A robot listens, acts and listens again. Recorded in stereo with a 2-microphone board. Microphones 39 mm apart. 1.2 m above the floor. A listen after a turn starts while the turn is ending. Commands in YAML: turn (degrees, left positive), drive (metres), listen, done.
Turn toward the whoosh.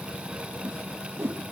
turn: -90
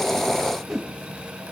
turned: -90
turn: 10
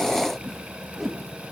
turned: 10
done: "Facing the whoosh, 2 to 4 m away."